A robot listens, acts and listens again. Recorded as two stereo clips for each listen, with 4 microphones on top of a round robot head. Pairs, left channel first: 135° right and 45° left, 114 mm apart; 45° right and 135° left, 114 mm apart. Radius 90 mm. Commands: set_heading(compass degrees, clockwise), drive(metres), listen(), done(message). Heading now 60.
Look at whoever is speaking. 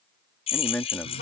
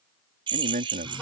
set_heading(275)
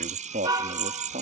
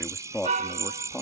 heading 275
set_heading(235)
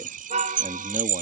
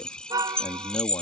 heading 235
listen()
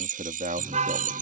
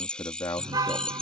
set_heading(220)
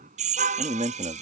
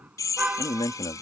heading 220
set_heading(210)
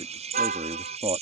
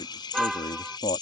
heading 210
done("Found it: a man speaking, straight ahead.")